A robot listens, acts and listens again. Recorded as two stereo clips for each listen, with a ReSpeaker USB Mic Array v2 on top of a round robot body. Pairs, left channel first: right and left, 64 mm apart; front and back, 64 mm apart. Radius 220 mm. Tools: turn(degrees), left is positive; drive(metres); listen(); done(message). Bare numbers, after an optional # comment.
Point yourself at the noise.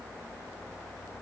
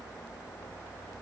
listen()
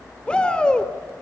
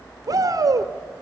# The shout: 165° right.
turn(-165)
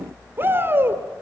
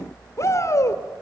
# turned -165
# The shout is now 40° left.
turn(40)
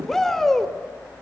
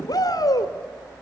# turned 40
done("Facing the shout, 2 to 4 m away.")